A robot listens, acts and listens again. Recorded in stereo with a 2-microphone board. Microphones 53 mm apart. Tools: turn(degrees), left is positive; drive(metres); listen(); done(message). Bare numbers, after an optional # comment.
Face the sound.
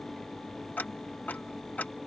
# The ticking: about 35° left or 145° left.
turn(35)
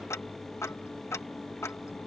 # So it is at 110° left.
turn(110)
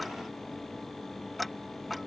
done("Found it: ticking, straight ahead.")